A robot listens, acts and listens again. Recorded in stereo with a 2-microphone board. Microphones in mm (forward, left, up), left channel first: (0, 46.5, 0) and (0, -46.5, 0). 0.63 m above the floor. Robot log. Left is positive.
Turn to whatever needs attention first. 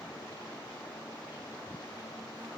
cmd idle
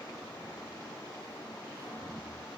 cmd idle
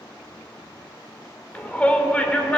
cmd yaw +30
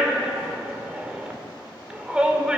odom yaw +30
note: So it is at 15° right.
cmd yaw -15
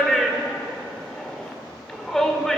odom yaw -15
end: Found it: a shout, straight ahead.